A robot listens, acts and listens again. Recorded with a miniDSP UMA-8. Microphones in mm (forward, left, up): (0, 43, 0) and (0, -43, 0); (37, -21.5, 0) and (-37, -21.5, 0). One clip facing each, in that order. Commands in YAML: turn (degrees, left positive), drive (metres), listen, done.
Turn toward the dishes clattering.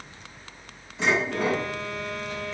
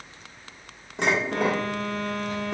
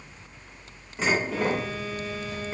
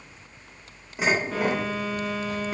turn: -105
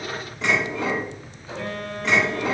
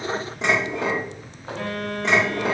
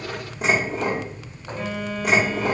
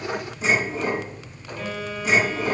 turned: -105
turn: -25
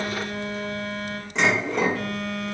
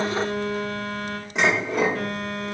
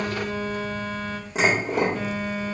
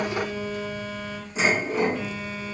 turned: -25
turn: -10
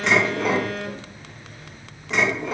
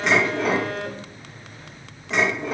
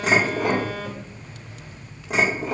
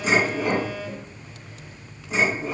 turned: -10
done: "Found it: dishes clattering, straight ahead, 1 to 2 m away."